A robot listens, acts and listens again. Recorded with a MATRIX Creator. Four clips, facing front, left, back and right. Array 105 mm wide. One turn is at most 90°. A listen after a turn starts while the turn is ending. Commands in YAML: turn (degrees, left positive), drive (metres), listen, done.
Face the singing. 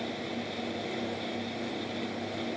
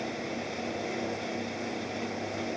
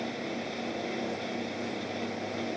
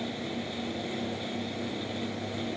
listen: true
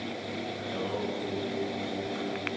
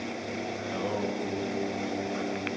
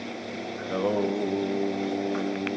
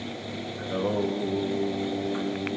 turn: -90
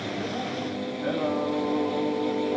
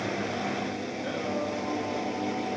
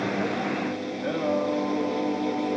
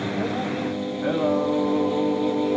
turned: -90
turn: -85
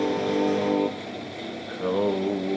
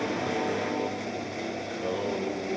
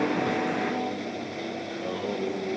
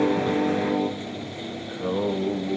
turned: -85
turn: -20
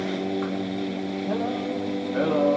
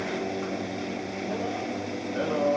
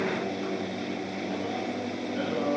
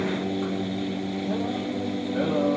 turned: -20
done: "Found it: singing, straight ahead."